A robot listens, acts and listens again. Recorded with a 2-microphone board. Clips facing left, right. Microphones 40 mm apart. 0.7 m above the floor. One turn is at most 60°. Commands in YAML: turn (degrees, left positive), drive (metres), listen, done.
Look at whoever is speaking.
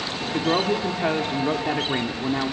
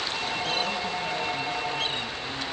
turn: 60
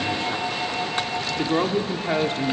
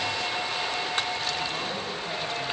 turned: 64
turn: 45
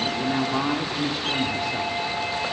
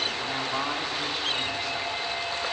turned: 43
done: "Facing the woman speaking."